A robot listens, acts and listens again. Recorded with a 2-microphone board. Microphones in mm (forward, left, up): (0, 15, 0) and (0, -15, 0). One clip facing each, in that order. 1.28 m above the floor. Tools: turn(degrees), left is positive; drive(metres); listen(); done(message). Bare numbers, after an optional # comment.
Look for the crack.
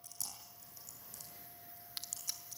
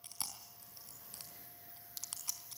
# The crack: about 45° left or 135° left.
turn(45)
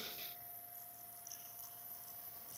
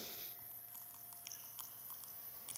listen()
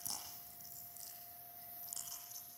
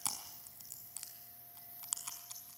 done("I heard a crack, but can't make it out now. It was about straight ahead or 90° left.")